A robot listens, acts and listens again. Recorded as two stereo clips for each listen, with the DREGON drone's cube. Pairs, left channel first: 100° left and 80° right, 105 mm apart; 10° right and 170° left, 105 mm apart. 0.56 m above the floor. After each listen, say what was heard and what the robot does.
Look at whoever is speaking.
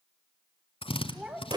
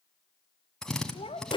Facing the child speaking.